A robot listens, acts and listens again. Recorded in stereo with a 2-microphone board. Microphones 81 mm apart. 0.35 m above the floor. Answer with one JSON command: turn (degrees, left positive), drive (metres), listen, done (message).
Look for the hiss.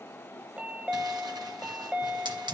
{"turn": -70}
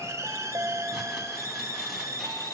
{"turn": -40}
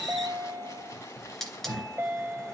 {"done": "Found it: a hiss, straight ahead."}